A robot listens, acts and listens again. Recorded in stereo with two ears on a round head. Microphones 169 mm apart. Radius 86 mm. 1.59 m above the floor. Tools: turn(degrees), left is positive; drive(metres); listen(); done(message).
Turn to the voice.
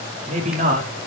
turn(degrees=-40)
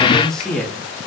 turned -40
done("Found it: a man speaking, straight ahead, 2 to 4 m away.")